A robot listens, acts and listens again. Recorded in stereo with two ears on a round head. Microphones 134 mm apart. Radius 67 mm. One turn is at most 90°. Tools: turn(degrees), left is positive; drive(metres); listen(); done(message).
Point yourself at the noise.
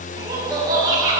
turn(degrees=-25)
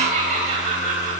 turn(degrees=-90)
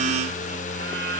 turn(degrees=-40)
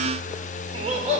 turn(degrees=-40)
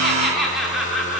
done("Found it: laughter, straight ahead, 2 to 4 m away.")